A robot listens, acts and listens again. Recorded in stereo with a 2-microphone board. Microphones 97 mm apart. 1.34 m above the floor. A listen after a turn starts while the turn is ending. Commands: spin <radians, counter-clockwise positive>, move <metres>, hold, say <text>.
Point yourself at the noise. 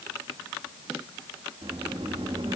spin -1.13
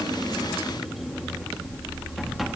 say Facing the sliding door.